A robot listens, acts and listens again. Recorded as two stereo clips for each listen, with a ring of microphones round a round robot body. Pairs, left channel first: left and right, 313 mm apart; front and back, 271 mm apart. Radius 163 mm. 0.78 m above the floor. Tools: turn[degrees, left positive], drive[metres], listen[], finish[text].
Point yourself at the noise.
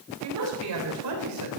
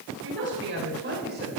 Thought: The woman speaking: 120° right.
Action: turn[-120]
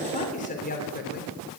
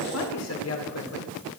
Thought: The woman speaking is now 30° left.
Action: turn[30]
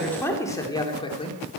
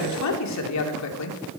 Thought: The woman speaking is now 20° left.
Action: turn[20]
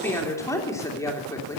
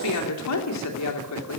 Thought: The woman speaking is now 10° left.
Action: turn[10]
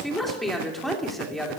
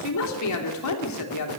Action: finish[Found it: a woman speaking, straight ahead.]